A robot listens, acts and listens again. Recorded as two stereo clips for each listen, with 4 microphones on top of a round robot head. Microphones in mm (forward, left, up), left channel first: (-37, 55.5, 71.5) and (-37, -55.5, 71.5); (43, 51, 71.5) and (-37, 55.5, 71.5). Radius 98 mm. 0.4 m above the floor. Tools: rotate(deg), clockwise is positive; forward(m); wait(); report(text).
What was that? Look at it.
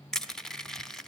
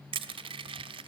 rotate(-175)
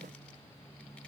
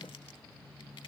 wait()
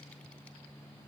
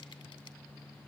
wait()
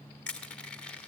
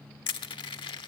rotate(-10)
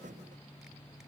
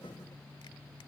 wait()
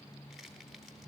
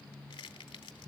report("Found it: crushing, straight ahead.")